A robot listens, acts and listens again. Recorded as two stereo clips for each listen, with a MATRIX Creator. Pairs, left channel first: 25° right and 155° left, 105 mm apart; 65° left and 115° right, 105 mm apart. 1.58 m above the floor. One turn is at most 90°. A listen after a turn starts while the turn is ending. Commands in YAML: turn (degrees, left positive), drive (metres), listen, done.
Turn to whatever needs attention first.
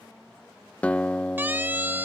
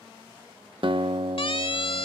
turn: 90
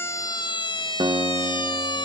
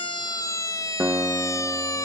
turn: 15
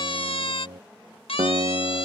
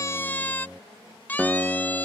done: "Facing the siren."